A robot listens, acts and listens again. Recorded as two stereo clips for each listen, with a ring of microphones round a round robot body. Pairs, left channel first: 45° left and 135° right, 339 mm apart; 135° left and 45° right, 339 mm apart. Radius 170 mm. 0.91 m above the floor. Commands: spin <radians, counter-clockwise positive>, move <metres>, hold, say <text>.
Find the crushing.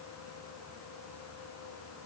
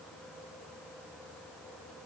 hold
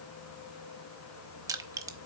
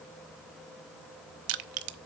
spin -0.96
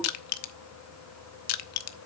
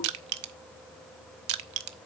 say Facing the crushing, under 1 m away.